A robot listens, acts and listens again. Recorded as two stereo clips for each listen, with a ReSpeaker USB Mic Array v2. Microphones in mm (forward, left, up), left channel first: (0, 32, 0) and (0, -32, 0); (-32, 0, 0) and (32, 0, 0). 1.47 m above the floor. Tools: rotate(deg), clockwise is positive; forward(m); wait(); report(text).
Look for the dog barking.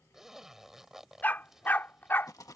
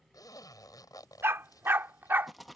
rotate(-45)
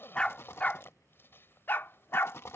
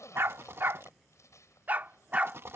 rotate(-60)
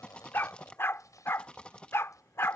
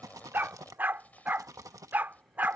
rotate(-55)
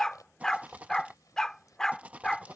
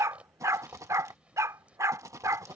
rotate(-10)
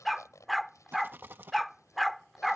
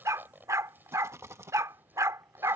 report("Found it: a dog barking, straight ahead.")